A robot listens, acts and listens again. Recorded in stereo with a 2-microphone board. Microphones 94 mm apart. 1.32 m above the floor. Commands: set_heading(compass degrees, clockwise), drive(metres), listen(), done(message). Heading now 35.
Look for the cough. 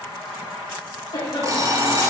set_heading(350)
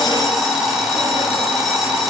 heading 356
listen()
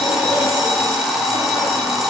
listen()
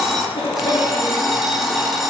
set_heading(261)
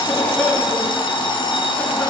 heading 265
done("Facing the cough.")